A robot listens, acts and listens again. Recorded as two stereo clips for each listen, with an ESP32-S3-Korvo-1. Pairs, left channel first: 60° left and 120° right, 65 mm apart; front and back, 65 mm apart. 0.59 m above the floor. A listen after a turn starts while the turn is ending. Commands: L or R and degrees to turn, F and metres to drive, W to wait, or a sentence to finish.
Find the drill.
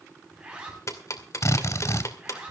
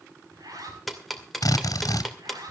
L25
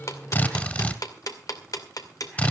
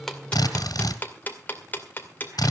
Facing the drill, 2 to 4 m away.